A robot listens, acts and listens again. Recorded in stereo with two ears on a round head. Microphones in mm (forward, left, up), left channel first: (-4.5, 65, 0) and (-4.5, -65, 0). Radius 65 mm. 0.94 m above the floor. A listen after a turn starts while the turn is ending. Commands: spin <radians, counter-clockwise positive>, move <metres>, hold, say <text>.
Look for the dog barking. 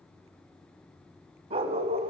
spin -0.79
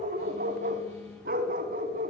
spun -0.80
spin -1.05
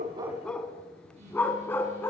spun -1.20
spin 0.26
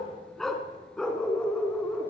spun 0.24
say Facing the dog barking, 2 to 4 m away.